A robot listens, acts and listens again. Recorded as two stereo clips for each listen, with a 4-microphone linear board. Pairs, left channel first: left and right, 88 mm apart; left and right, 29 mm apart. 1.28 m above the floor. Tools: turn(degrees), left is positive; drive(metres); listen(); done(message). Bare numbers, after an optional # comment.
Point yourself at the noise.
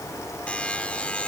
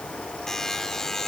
turn(30)
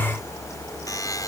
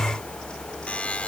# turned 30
# So it is at 135° left.
turn(135)
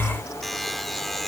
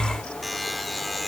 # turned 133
done("Facing the buzzer.")